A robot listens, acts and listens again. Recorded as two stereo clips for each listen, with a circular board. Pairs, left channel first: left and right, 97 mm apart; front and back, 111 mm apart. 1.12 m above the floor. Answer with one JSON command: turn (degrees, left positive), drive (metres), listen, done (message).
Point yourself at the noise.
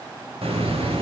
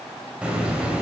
{"turn": -100}
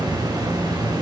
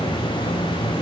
{"turn": -45}
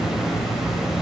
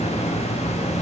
{"done": "Found it: a hiss, straight ahead."}